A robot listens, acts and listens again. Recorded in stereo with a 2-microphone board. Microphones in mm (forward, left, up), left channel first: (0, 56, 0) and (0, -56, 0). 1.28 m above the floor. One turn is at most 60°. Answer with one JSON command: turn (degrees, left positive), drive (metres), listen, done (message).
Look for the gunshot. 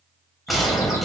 {"turn": 30}
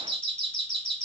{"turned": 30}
{"listen": true}
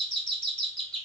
{"done": "I heard a gunshot, but can't make it out now. It was about 30° right or 150° left."}